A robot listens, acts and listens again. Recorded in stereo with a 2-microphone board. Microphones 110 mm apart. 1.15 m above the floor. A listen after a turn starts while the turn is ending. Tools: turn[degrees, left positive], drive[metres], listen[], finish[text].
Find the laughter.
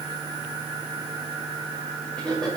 Action: turn[30]
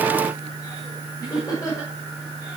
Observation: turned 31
Thought: So it is at 150° left.
Action: turn[150]
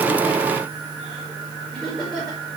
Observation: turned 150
Thought: The laughter is now 10° left.
Action: turn[10]
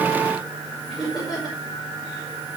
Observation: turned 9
Action: finish[Facing the laughter, over 4 m away.]